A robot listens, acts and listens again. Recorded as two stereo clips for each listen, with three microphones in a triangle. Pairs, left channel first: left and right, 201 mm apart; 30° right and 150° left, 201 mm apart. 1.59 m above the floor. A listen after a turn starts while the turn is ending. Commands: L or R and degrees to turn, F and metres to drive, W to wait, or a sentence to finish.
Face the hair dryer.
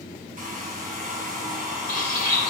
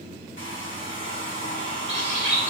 R40
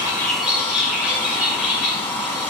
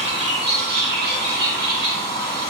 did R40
L10
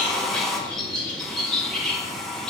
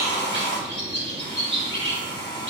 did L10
Found it: a hair dryer, straight ahead, 1 to 2 m away.